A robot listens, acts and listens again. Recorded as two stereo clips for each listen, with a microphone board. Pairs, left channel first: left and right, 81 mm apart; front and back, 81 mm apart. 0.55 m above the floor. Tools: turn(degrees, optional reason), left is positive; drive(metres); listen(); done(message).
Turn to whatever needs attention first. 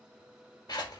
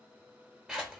listen()
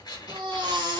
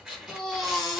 turn(degrees=-90, reason="The baby crying: 90° right.")
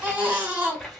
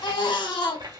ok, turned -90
turn(degrees=-20, reason="The baby crying is now 20° right.")
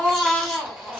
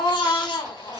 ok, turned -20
done("Facing the baby crying.")